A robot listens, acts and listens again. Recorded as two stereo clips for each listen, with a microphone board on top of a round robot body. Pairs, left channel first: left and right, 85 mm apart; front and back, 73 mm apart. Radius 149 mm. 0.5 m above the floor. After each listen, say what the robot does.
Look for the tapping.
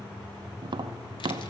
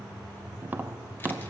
Turn 115° right.
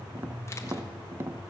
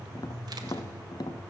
Turn 30° right.
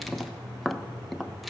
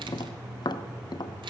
Found it: tapping, straight ahead.